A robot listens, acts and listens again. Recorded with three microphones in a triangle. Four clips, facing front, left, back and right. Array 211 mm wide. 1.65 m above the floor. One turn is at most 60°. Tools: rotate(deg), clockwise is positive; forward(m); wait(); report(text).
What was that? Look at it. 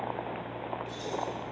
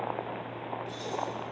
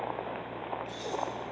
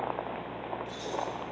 rotate(-60)
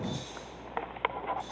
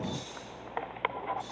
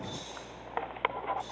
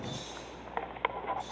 rotate(-30)
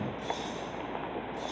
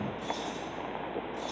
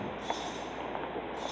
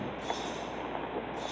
rotate(20)
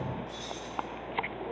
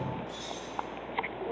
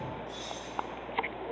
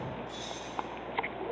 report("Facing the keys jangling.")